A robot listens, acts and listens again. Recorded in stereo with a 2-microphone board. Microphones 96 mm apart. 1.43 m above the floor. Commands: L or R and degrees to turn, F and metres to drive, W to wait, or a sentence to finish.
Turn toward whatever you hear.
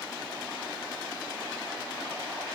W
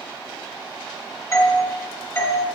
L30
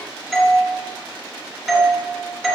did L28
Found it: a doorbell, straight ahead.